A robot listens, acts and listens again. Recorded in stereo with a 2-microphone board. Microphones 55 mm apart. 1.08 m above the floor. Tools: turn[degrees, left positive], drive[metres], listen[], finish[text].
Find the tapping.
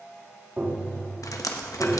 Thought: The tapping: about 30° right or 150° right.
Action: turn[-30]
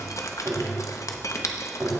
Thought: So it is at 115° right.
Action: turn[-115]
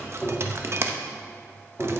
Action: finish[Facing the tapping, 2 to 4 m away.]